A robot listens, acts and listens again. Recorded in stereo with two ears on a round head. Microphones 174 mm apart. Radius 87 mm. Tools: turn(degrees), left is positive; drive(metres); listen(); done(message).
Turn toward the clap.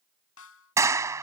turn(degrees=-30)
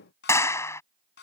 turn(degrees=15)
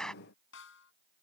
done("Facing the clap.")